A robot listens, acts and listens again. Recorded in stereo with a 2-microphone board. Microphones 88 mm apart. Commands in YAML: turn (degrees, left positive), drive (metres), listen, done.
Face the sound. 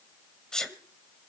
turn: 30
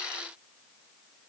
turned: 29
listen: true
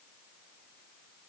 done: "I heard a sneeze, but can't make it out now. It was about 20° right or 145° left."